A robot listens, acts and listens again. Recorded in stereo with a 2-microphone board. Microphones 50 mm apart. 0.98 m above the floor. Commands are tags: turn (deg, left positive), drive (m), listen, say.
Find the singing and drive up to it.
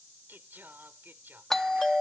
<turn deg="-40"/>
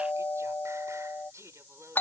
<turn deg="-100"/>
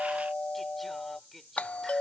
<drive m="1.0"/>
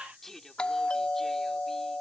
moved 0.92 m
<drive m="1.0"/>
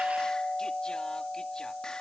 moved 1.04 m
<listen/>
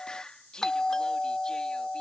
<turn deg="15"/>
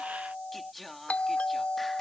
<drive m="1.0"/>
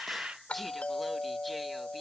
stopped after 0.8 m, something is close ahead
<say>Arrived at the singing, straight ahead.</say>